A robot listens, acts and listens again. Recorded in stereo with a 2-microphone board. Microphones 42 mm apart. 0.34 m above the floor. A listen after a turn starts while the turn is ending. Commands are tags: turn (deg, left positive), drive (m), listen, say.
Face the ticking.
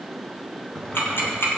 <turn deg="70"/>
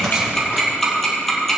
<say>Found it: ticking, straight ahead.</say>